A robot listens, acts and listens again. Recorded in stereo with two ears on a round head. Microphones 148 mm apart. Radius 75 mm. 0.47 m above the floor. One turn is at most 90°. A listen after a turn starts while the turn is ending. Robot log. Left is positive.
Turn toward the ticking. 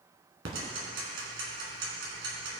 note: The ticking: about 70° right or 110° right.
cmd yaw -70
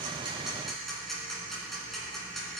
end: Facing the ticking.